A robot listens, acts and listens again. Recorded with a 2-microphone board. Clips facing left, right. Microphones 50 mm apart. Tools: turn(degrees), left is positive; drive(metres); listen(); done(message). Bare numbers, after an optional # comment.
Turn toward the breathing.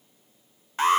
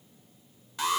listen()
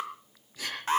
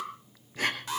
# The breathing: about 40° right or 140° right.
turn(-40)
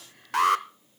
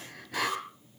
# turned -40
listen()
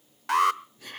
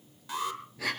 # So it is at 100° right.
turn(-100)
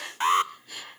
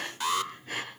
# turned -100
# The breathing is now 40° right.
turn(-40)
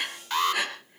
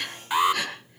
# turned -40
# The breathing is now 10° left.
turn(10)
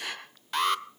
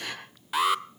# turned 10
done("Facing the breathing.")